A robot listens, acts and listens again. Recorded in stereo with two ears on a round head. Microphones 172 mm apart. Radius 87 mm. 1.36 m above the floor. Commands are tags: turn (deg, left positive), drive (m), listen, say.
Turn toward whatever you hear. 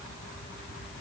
<listen/>
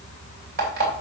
<turn deg="-50"/>
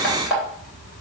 <say>Found it: an alarm clock, straight ahead.</say>